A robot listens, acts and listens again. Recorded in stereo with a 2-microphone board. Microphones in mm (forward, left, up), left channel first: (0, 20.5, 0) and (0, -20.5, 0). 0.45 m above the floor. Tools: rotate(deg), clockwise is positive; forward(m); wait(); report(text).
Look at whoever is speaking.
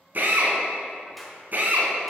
wait()
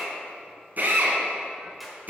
wait()
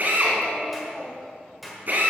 rotate(-30)
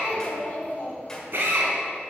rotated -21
rotate(-135)
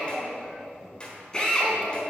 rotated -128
report("Found it: a child speaking, straight ahead, 2 to 4 m away.")